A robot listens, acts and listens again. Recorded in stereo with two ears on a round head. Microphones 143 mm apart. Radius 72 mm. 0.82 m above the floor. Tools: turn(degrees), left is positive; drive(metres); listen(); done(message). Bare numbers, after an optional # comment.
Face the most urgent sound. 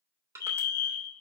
# The fire alarm: about 20° left or 160° left.
turn(20)
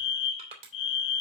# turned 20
# So it is at 135° left.
turn(135)
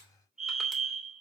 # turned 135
done("Found it: a fire alarm, straight ahead, over 4 m away.")